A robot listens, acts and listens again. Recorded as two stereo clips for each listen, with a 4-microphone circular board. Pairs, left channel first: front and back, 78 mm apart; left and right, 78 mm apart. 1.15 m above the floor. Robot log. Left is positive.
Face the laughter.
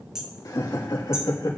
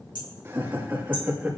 note: The laughter: 25° right.
cmd yaw -25
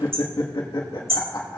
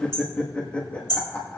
note: The laughter is now 35° left.
cmd yaw +35
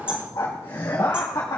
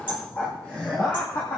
note: The laughter is now 40° left.
cmd yaw +40
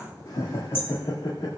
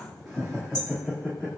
note: The laughter is now 10° left.
cmd yaw +10
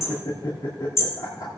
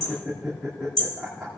end: Facing the laughter.